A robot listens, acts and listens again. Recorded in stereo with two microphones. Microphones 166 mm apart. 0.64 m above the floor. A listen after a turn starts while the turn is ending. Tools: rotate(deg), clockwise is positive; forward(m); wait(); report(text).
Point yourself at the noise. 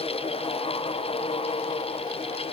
wait()
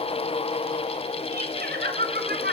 rotate(70)
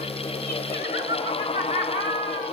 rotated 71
rotate(35)
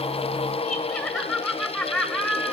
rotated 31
report("Found it: laughter, straight ahead, over 4 m away.")